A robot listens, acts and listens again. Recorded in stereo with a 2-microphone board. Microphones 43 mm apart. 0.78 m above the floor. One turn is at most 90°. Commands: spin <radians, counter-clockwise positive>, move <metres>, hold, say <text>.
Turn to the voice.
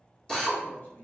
spin 0.79
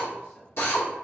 hold
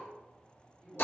say Found it: a man speaking, straight ahead.